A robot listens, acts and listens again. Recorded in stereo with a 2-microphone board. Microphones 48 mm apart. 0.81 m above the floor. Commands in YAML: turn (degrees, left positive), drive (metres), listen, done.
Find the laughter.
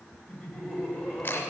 turn: 15
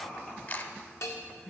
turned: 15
turn: 20
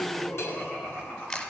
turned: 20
turn: 35
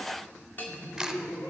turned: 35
turn: 120
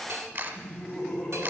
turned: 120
done: "Facing the laughter."